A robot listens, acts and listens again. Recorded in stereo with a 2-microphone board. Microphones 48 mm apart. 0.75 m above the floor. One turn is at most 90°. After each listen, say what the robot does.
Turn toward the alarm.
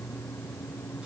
Keep listening.
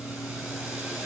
Keep listening.
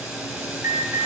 Turn 65° right.
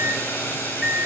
Found it: an alarm, straight ahead, over 4 m away.